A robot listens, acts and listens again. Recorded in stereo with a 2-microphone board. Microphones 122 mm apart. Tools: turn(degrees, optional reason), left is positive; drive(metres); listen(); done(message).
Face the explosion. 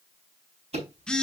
listen()
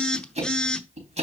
listen()
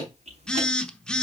done("I can't make out an explosion, only ticking and a phone buzzing.")